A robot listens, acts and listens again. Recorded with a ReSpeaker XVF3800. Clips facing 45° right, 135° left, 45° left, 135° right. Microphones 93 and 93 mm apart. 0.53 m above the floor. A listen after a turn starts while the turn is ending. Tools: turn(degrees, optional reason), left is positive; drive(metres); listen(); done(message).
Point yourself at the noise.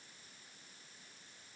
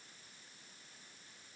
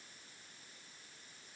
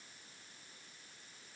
listen()
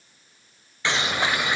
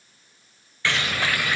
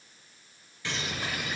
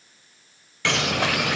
turn(degrees=-115, reason="The bird: 115° right.")
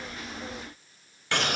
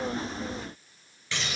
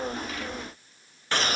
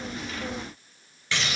done("Facing the bird.")